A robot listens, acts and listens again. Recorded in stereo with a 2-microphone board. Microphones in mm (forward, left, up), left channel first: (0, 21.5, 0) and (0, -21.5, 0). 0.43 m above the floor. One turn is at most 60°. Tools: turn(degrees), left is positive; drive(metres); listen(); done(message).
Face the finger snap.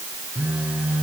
listen()
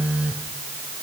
listen()
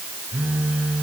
done("I can't make out a finger snap to turn to.")